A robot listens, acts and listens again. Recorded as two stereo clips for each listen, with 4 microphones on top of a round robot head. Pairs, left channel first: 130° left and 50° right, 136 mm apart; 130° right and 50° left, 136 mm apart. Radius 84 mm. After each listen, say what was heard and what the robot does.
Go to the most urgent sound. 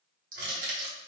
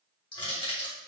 Keep listening.
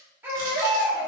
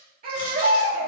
The baby crying: 25° left. Turn 25° left.
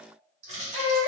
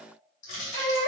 Drive 1.0 m forward.
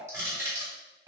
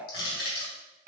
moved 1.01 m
Keep listening.
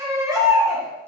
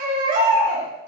The baby crying is now 20° left. Turn 20° left.
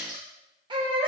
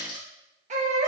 The baby crying is now 10° left. Turn 10° left.
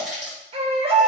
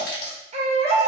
Drive 1.0 m forward.
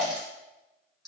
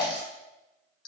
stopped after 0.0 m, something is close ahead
I am next to the baby crying.